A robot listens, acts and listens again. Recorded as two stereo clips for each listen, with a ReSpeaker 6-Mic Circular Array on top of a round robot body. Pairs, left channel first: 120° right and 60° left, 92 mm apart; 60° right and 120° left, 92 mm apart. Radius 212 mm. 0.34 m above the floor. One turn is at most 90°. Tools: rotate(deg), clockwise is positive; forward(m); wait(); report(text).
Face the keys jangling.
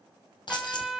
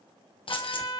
rotate(80)
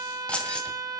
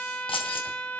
rotate(40)
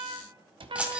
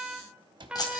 rotate(15)
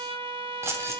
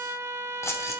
report("Found it: keys jangling, straight ahead.")